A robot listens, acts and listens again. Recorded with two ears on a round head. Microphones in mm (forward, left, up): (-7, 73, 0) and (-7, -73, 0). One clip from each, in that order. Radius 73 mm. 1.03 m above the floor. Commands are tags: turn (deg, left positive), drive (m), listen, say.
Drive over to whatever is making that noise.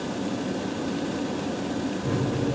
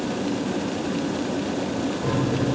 <turn deg="-75"/>
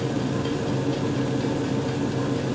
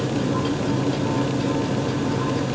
<drive m="1.0"/>
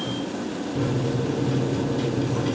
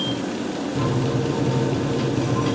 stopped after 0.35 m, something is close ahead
<say>Blocked. The microwave is further on, straight ahead.</say>